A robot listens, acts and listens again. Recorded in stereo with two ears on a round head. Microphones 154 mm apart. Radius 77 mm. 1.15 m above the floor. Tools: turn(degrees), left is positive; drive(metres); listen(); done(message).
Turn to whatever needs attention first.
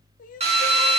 turn(degrees=50)
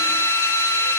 listen()
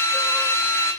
listen()
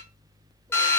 done("I heard crying, but can't make it out now. It was about straight ahead or 80° left.")